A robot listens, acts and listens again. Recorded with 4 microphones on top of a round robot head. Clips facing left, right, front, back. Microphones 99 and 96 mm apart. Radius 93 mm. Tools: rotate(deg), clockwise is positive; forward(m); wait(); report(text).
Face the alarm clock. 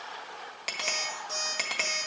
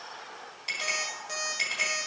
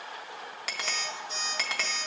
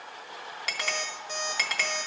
rotate(140)
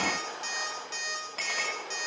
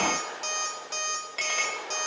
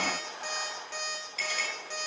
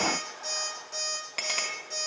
rotate(50)
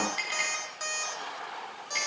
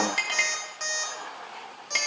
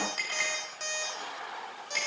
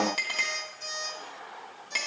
rotate(-10)
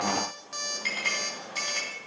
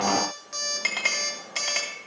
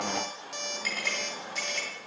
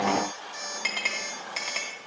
report("Found it: an alarm clock, straight ahead.")